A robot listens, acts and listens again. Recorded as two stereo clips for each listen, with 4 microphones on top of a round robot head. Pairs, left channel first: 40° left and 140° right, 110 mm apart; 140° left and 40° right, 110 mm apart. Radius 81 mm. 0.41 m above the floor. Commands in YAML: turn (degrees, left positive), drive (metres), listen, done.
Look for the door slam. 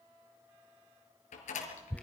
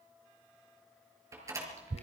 turn: 25
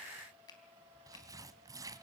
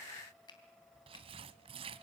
done: "Facing where the door slam came from. I can't hear it now."